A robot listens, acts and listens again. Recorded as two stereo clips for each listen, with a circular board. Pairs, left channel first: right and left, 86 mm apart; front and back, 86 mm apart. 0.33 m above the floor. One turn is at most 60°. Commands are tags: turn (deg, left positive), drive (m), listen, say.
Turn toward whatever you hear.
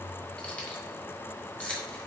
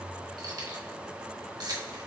<turn deg="-60"/>
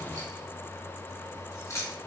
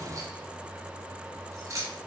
<turn deg="-60"/>
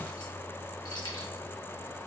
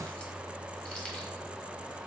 <turn deg="-60"/>
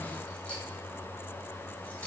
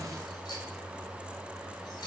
<turn deg="-20"/>
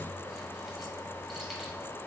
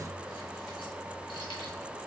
<listen/>
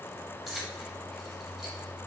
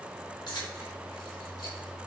<say>Found it: keys jangling, straight ahead, 1 to 2 m away.</say>